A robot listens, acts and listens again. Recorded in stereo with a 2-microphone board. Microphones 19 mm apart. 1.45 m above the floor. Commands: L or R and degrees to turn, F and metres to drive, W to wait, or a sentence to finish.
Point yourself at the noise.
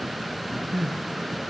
R30
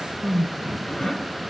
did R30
L25
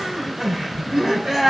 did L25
R20
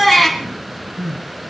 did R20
R10
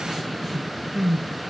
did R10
Facing the crying.